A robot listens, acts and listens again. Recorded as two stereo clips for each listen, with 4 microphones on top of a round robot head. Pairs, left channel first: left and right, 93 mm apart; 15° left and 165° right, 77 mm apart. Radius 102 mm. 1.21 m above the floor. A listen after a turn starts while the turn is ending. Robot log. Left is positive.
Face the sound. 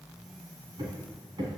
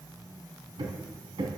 note: The hammering: 140° right.
cmd yaw -140
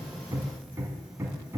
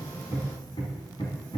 note: The hammering is now 30° right.
cmd yaw -30
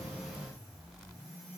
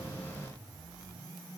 cmd idle
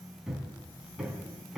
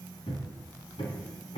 end: Found it: hammering, straight ahead.